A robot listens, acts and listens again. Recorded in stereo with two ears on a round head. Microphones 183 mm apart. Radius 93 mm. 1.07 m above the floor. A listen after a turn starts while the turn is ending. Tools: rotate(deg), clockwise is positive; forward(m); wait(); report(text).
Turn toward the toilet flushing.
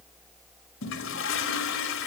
rotate(-75)
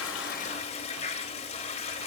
rotate(-30)
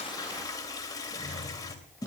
rotate(-20)
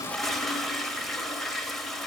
report("Facing the toilet flushing, 2 to 4 m away.")